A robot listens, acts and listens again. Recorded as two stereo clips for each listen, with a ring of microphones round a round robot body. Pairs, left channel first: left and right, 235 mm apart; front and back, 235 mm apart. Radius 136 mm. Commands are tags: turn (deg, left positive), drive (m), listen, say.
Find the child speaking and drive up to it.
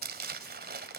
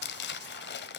<listen/>
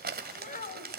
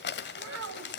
<turn deg="150"/>
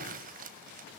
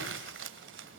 <listen/>
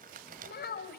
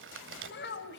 <turn deg="45"/>
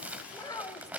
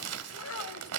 <turn deg="15"/>
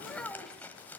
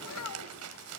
<drive m="1.0"/>
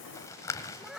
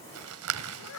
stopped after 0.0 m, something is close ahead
<say>Blocked. The child speaking is further on, straight ahead.</say>